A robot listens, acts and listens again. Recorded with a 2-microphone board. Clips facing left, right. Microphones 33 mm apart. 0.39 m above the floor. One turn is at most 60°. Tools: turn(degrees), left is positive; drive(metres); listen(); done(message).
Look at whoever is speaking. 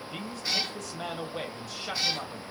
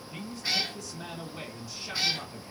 turn(degrees=60)
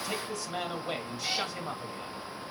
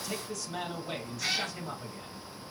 turn(degrees=35)
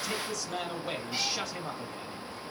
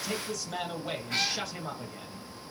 done("Facing the man speaking, 1 to 2 m away.")